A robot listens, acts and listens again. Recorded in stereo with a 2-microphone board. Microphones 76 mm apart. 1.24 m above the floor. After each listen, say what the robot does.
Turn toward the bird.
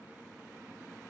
Keep listening.
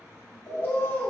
Turn 35° left.
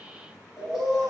Found it: a bird, straight ahead.